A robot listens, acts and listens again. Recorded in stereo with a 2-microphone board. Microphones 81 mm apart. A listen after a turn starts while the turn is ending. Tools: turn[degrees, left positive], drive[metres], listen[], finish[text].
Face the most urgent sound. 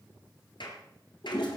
Action: listen[]
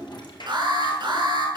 Thought: The alarm: about 65° right or 115° right.
Action: turn[-65]
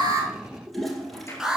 Action: finish[Found it: an alarm, straight ahead.]